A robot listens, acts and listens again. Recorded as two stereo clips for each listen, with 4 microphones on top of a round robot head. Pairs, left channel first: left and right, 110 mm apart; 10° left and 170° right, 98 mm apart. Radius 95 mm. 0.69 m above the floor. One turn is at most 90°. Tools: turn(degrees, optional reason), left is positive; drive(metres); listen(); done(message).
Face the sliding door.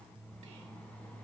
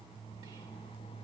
listen()
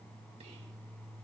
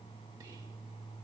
listen()
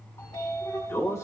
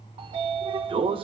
turn(degrees=90, reason="The sliding door: 160° left.")
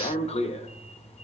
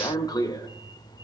turn(degrees=60, reason="The sliding door is now 60° left.")
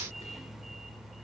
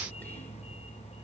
done("Found it: a sliding door, straight ahead.")